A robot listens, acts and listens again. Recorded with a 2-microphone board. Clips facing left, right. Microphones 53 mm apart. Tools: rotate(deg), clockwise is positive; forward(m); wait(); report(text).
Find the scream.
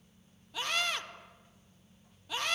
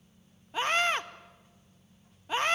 rotate(35)
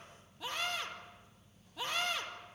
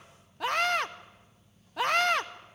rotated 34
rotate(115)
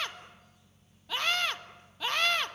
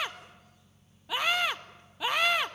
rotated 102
rotate(15)
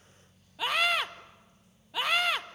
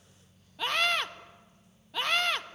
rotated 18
report("Facing the scream, 1 to 2 m away.")